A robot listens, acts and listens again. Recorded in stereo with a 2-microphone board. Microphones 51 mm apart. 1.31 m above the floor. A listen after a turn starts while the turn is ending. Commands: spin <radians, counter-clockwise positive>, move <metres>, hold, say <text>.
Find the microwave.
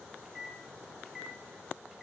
spin -0.52
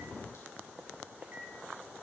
spin -2.53
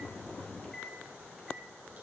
say Found it: a microwave, straight ahead, 2 to 4 m away.